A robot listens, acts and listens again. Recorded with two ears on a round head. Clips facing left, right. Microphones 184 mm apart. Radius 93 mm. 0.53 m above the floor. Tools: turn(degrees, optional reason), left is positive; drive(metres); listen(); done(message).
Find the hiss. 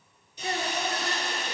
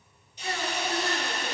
turn(degrees=90)
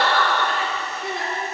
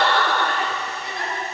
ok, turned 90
listen()
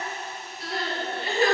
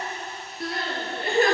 listen()
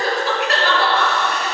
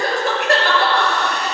done("Facing where the hiss came from. I can't hear it now.")